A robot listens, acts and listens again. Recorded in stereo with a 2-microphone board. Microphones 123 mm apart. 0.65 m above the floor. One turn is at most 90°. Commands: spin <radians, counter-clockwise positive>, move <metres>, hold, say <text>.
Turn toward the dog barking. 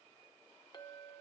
hold
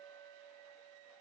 hold
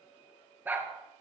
spin -0.26
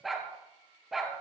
spin -0.52
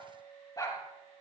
spin 0.52
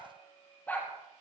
spin 0.26
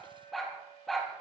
say Facing the dog barking.